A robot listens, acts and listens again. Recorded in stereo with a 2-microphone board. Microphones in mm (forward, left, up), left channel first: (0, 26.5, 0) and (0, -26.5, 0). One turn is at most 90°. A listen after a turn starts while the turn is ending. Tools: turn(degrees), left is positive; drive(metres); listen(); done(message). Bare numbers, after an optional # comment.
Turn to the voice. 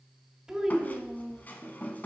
turn(-30)
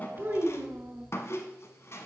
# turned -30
# So it is at 140° right.
turn(-90)
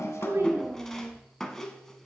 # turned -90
# The child speaking is now 35° right.
turn(-35)
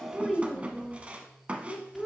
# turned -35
done("Facing the child speaking.")